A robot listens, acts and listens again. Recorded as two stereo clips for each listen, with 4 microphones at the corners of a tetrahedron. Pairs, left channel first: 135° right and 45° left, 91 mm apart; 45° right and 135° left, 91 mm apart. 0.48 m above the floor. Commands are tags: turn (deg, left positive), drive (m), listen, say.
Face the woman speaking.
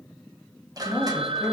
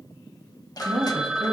<turn deg="130"/>
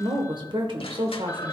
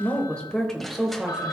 <turn deg="55"/>
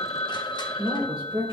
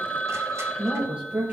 <turn deg="60"/>
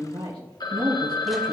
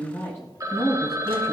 <turn deg="15"/>
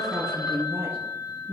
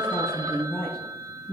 <turn deg="10"/>
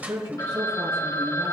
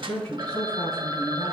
<say>Facing the woman speaking, 2 to 4 m away.</say>